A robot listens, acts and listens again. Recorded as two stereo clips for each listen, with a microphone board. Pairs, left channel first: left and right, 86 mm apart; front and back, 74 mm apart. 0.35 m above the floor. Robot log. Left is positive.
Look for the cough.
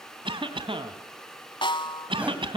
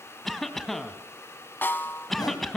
note: The cough: 85° right.
cmd yaw -85
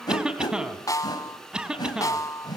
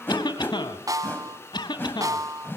note: The cough is now 10° right.
cmd yaw -10
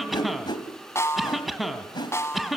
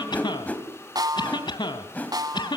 end: Found it: a cough, straight ahead, 2 to 4 m away.